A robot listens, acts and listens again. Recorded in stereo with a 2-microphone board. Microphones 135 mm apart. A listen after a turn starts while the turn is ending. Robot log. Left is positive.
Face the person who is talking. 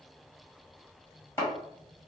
cmd idle
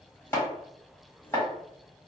cmd idle
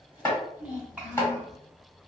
cmd yaw -30
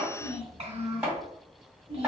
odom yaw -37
note: So it is at 130° right.
cmd yaw -130
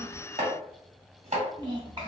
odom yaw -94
note: The child speaking is now 40° right.
cmd yaw -40
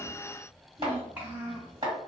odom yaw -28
note: The child speaking is now 10° right.
cmd yaw -10
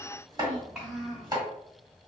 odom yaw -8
end: Facing the child speaking.